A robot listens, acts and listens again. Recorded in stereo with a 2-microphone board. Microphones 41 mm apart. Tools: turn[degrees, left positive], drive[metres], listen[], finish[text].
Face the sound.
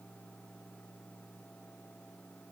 Action: listen[]
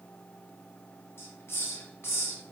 Action: turn[90]
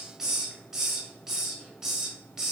Thought: So it is at 15° right.
Action: turn[-15]
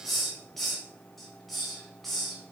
Action: finish[Found it: a hiss, straight ahead, 1 to 2 m away.]